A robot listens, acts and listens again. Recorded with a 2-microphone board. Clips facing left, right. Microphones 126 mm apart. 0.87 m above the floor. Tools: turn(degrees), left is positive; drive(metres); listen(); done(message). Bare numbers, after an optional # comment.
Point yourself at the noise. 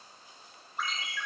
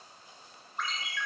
turn(30)
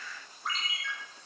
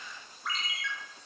# So it is at 145° left.
turn(145)
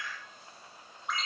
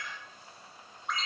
done("Facing the ringtone, 2 to 4 m away.")